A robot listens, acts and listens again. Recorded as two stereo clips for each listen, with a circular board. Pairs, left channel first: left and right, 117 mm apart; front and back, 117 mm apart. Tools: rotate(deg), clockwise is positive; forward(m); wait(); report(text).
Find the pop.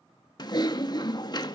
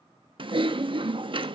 wait()
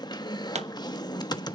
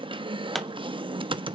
rotate(90)
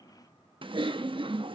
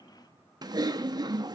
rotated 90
report("Facing where the pop came from. I can't hear it now.")